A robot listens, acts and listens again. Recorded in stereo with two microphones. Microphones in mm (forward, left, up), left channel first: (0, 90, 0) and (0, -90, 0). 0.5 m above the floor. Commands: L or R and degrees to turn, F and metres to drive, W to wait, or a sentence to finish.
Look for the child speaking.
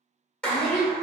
R40
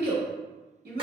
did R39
R100
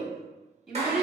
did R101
Facing the child speaking, 1 to 2 m away.